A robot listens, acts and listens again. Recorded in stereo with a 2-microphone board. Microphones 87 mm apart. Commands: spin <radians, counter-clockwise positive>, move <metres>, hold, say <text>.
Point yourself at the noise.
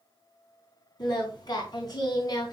spin 0.79
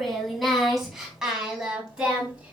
spin -0.26
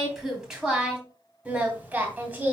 spin -0.35
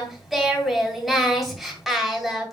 say Found it: singing, straight ahead.